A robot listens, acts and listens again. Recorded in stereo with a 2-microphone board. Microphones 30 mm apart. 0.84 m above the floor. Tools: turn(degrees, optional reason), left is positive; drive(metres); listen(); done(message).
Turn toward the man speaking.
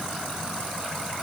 listen()
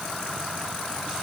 listen()
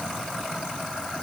done("I can't make out a man speaking.")